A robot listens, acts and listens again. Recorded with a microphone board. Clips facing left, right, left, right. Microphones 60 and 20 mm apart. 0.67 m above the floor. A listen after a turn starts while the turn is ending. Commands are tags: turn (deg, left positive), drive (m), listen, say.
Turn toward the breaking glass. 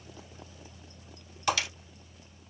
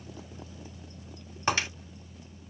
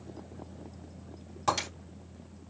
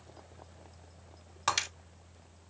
<turn deg="-35"/>
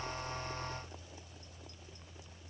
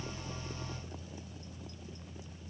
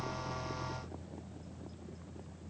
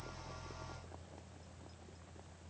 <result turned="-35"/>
<listen/>
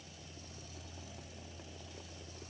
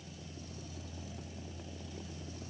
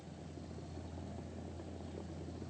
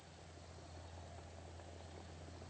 <say>I heard breaking glass, but can't make it out now. It was about straight ahead or 110° right.</say>